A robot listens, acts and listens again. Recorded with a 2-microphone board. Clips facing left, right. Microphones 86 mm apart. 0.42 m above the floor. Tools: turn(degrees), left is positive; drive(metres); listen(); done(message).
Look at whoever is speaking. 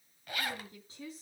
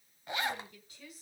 turn(degrees=30)
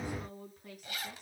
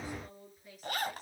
turn(degrees=120)
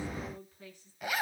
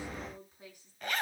turn(degrees=-15)
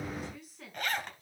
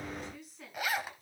done("Facing the woman speaking.")